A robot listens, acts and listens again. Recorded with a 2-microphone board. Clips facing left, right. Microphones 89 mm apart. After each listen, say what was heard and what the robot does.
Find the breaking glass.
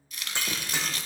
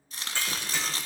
The breaking glass: about 20° left or 160° left. Turn 20° left.
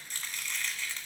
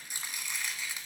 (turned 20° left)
Keep listening.
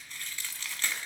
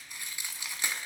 I heard breaking glass, but can't make it out now. It was about straight ahead or 140° left.